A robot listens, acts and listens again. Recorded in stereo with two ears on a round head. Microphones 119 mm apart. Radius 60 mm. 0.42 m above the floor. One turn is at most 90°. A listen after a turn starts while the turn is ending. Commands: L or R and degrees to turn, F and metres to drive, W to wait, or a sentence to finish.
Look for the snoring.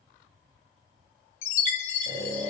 L30
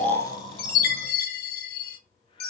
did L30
W
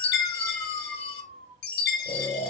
L90
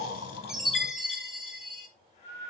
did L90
L50
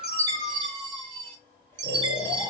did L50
W
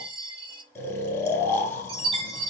L20
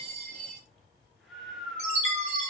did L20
Found it: snoring, straight ahead, 1 to 2 m away.